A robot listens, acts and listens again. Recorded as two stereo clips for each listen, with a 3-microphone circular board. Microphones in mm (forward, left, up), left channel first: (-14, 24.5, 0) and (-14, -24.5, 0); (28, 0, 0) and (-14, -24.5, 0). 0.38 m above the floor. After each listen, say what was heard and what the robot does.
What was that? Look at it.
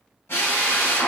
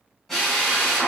The drill: 120° left. Turn 120° left.
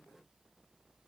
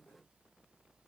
Keep listening.
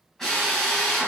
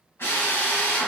Facing the drill.